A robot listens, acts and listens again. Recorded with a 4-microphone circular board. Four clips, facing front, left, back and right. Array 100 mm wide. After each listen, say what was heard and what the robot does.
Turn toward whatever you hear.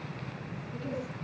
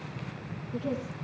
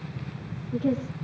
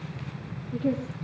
The woman speaking: 150° right. Turn 150° right.
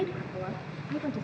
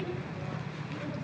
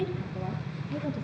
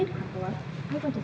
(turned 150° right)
The woman speaking is now 40° right. Turn 40° right.
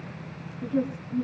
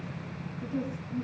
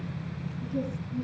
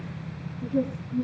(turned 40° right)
Facing the woman speaking.